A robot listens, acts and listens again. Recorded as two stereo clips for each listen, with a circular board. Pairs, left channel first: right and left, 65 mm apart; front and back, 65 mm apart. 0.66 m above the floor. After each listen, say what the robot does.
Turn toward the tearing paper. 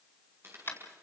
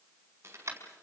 Turn 135° left.
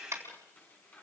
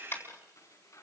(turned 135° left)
Turn 30° right.
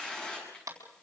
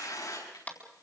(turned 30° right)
Turn 15° right.
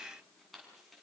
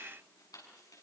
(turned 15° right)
Found it: tearing paper, straight ahead.